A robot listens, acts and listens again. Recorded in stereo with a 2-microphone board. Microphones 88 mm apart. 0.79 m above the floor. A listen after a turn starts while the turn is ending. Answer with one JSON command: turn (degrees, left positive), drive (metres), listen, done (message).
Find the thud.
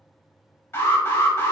{"listen": true}
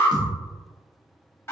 {"turn": -50}
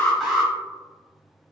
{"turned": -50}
{"listen": true}
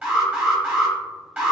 {"done": "I heard a thud, but can't make it out now. It was about straight ahead or 80° right."}